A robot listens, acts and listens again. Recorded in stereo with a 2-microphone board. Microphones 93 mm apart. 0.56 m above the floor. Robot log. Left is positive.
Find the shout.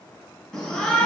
cmd yaw +30
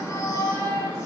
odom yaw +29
note: So it is at 145° left.
cmd yaw +145
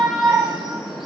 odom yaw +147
end: Found it: a shout, straight ahead.